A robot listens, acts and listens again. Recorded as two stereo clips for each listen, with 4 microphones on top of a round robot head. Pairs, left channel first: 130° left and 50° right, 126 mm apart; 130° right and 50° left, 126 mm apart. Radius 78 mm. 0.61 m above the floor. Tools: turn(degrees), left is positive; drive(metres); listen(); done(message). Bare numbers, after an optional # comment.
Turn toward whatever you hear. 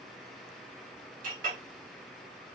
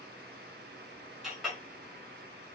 # The clink: 40° right.
turn(-40)
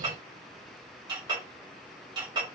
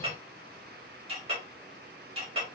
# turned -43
done("Found it: a clink, straight ahead, 2 to 4 m away.")